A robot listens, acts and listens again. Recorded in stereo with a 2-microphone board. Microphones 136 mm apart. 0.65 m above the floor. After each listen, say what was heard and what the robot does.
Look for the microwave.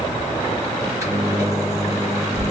The microwave: about 25° right or 155° right. Turn 25° right.
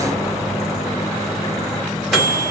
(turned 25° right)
Facing the microwave, 1 to 2 m away.